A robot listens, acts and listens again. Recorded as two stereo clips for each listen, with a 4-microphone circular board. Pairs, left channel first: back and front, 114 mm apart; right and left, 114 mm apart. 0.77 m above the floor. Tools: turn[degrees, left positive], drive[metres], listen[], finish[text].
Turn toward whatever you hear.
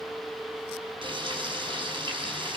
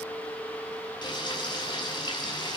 Thought: The frying: 40° right.
Action: turn[-40]
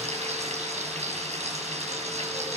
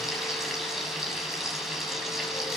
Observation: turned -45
Action: finish[Facing the frying, over 4 m away.]